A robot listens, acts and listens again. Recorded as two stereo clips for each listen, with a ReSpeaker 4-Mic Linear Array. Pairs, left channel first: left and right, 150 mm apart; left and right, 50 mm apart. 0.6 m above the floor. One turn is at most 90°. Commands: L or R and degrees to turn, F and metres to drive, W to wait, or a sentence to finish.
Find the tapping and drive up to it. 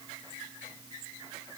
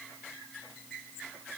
W
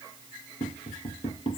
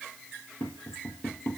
L40
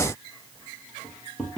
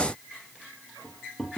F1.0
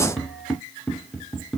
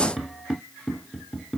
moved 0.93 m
F1.0
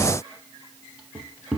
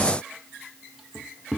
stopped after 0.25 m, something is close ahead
Arrived at the tapping, straight ahead.